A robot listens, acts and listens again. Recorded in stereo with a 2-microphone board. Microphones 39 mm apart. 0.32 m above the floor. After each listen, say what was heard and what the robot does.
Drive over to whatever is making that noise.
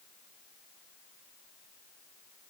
Keep listening.
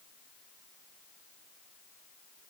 Keep listening.
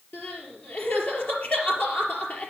The crying: about 45° left or 135° left. Turn 45° left.
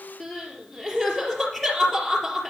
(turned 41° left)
Drive 1.0 m forward.
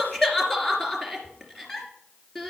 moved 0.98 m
The crying is now 10° left. Turn 10° left.
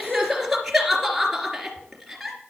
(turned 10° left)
Drive 1.0 m forward.
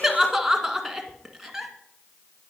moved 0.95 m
Drive 1.0 m forward.
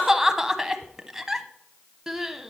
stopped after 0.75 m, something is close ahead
The crying is now 10° right. Turn 10° right.
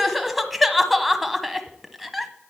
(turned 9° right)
I am next to the crying.